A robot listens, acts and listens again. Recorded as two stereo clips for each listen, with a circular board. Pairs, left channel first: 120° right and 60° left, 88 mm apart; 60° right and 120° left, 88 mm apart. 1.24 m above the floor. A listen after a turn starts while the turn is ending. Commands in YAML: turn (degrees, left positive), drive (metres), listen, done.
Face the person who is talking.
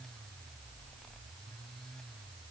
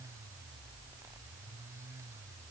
listen: true
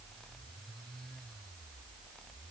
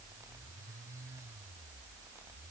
listen: true
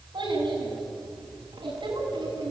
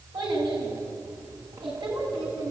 turn: 90
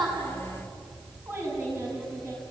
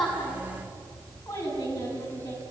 done: "Found it: a child speaking, straight ahead, over 4 m away."